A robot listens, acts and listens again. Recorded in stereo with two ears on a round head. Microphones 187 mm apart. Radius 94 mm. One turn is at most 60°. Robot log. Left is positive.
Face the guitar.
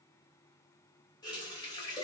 cmd idle
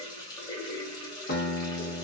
note: The guitar: about 55° left or 125° left.
cmd yaw +55
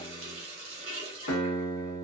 note: So it is at 65° left.
cmd yaw +60
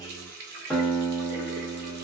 end: Found it: a guitar, straight ahead.